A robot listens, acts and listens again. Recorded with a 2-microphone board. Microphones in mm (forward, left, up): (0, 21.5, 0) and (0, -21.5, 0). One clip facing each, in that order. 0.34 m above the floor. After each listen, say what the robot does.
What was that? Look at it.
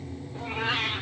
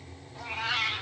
Turn 40° left.
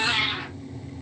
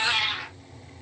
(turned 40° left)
Turn 20° left.
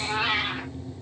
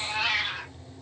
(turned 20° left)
Turn 30° left.
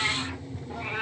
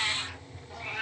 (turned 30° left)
Turn 30° left.
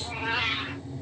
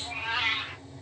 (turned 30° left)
Found it: a cat meowing, straight ahead.